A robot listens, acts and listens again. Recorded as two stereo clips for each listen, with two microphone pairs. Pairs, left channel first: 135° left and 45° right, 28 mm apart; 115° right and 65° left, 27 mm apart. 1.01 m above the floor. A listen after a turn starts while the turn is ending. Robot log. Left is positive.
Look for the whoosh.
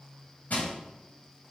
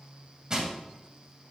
cmd idle
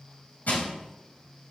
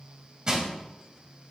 cmd idle
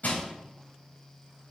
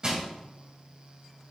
end: I can't make out a whoosh to turn to.